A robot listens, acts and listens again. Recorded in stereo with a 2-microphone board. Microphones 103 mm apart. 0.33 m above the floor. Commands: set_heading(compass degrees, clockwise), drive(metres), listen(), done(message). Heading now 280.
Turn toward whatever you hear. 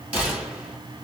set_heading(295)
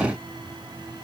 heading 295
listen()
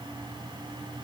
done("I heard a gunshot, but can't make it out now. It was about straight ahead or 150° right.")